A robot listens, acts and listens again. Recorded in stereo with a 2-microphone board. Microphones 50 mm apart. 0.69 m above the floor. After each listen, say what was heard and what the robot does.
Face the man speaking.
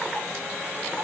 Keep listening.
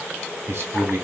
The man speaking: about 55° right or 125° right. Turn 55° right.
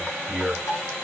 So it is at 15° right. Turn 15° right.
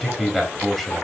Found it: a man speaking, straight ahead.